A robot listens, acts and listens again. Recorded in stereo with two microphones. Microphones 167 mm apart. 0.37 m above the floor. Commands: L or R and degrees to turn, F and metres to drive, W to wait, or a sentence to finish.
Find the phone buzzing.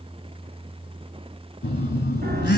L75
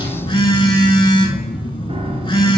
L25
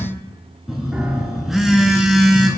Found it: a phone buzzing, straight ahead.